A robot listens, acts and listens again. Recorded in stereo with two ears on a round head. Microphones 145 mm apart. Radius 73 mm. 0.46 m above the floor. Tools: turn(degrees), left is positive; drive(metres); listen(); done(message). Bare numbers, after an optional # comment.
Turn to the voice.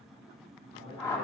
# The man speaking: about 35° left or 145° left.
turn(35)
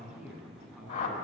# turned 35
done("Facing the man speaking.")